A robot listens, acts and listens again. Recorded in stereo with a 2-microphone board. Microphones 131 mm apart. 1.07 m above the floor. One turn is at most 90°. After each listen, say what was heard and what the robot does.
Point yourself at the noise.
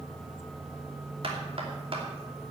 The knocking: about 50° right or 130° right. Turn 50° right.
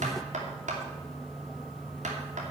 So it is at 80° right. Turn 80° right.
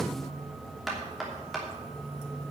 Facing the knocking, 2 to 4 m away.